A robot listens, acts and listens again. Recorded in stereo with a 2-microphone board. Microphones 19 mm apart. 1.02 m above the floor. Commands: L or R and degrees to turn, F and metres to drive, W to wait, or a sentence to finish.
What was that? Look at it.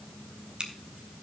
R50
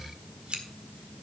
R75
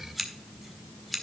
Found it: scissors, straight ahead.